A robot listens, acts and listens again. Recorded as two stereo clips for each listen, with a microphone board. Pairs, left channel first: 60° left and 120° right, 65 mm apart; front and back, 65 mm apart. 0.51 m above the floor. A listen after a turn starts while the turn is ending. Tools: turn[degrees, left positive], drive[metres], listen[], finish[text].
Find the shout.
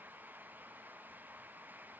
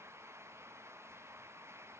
Action: listen[]
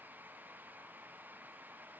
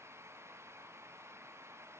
Action: listen[]
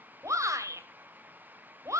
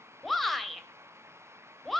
Thought: The shout: 90° right.
Action: turn[-90]
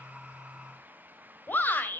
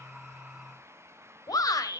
Action: finish[Found it: a shout, straight ahead.]